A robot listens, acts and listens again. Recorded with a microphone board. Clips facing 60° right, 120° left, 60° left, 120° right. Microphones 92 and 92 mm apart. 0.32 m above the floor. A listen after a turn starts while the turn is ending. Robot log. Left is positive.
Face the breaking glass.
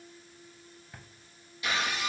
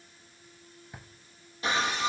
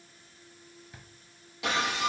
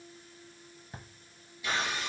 note: The breaking glass: 65° left.
cmd yaw +65
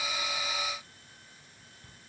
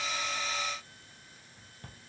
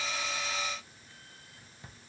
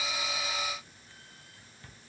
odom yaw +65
end: Facing where the breaking glass came from. I can't hear it now.